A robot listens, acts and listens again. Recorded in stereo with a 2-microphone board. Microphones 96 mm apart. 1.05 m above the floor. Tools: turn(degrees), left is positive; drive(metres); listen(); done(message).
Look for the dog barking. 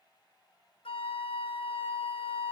listen()
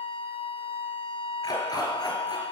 turn(degrees=50)
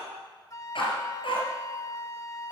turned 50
turn(degrees=70)
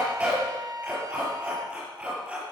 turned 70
turn(degrees=-15)
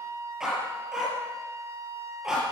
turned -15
done("Facing the dog barking.")